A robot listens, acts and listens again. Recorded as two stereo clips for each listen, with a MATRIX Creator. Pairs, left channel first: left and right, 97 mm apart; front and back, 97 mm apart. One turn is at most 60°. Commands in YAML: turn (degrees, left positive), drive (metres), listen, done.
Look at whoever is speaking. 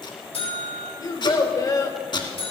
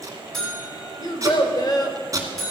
turn: 45
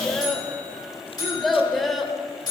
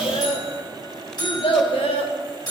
done: "Facing the child speaking."